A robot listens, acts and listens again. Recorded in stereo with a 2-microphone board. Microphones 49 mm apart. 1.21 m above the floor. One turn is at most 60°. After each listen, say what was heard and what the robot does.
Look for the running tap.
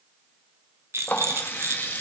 The running tap: about 45° left or 135° left. Turn 45° left.
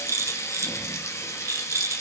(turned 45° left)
So it is at 95° left. Turn 60° left.
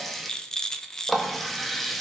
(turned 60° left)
Found it: a running tap, straight ahead, 1 to 2 m away.